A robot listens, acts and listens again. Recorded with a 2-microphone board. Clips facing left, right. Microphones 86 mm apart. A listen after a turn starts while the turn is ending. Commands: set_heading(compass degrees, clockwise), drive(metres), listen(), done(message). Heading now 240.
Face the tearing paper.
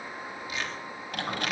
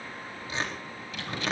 set_heading(275)
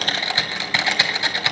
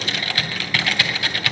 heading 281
listen()
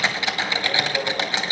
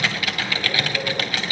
listen()
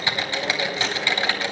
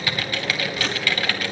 done("I heard tearing paper, but can't make it out now. It was about 10° left or 105° right.")